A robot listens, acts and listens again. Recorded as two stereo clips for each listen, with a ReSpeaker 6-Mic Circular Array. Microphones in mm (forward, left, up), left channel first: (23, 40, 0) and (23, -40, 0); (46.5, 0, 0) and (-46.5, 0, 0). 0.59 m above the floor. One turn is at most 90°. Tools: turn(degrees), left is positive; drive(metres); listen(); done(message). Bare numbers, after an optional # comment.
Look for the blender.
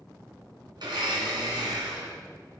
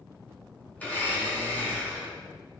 # The blender: 70° right.
turn(-70)
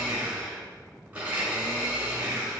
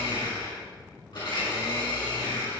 # The blender is now 20° right.
turn(-20)
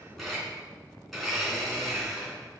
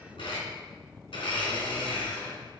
done("Found it: a blender, straight ahead, 2 to 4 m away.")